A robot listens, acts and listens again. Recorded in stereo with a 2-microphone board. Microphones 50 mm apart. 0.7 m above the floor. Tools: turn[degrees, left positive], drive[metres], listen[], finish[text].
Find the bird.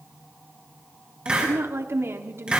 Action: listen[]
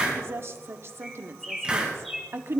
Action: turn[30]
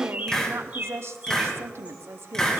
Thought: So it is at 30° right.
Action: turn[-30]
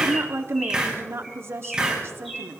Action: finish[Found it: a bird, straight ahead, over 4 m away.]